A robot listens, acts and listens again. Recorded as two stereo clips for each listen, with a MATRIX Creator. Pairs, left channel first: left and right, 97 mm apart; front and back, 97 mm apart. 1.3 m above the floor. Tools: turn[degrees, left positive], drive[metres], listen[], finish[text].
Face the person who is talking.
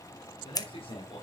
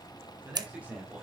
Thought: The man speaking: 105° left.
Action: turn[105]
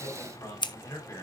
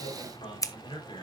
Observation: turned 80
Thought: The man speaking is now 35° left.
Action: turn[35]
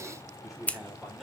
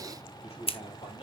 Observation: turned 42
Action: finish[Found it: a man speaking, straight ahead.]